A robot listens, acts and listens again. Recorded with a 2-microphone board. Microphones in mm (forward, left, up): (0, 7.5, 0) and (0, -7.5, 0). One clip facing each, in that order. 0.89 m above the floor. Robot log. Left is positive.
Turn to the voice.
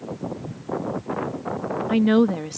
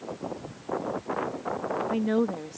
note: The woman speaking: about 60° left or 120° left.
cmd yaw +60
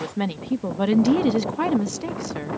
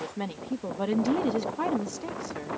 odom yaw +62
note: So it is at 40° left.
cmd yaw +40
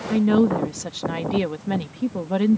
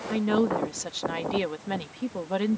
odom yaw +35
end: Facing the woman speaking.